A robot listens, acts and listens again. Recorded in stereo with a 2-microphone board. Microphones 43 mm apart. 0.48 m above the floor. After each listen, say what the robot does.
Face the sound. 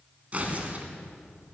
Turn 35° right.
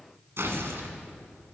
Turn 110° right.
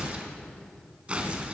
Turn 25° right.
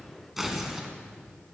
Found it: tearing paper, straight ahead.